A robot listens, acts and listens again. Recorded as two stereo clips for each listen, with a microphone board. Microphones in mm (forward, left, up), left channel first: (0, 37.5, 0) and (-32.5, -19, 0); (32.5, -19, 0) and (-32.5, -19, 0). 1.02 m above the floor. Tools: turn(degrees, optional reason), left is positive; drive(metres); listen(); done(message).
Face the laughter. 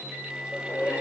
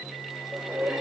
turn(degrees=110, reason="The laughter: 110° left.")
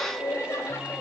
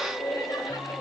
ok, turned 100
done("Facing the laughter.")